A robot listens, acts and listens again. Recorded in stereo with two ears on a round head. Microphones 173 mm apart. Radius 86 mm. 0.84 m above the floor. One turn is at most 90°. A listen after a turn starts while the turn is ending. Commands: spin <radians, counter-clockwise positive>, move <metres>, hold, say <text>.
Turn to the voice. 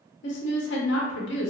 spin 1.13
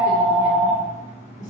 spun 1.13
hold
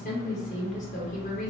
spin 0.70
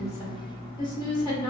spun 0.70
spin 0.44
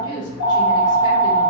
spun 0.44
spin 0.44
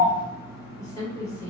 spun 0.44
spin 0.26
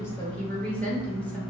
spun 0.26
say Facing the woman speaking.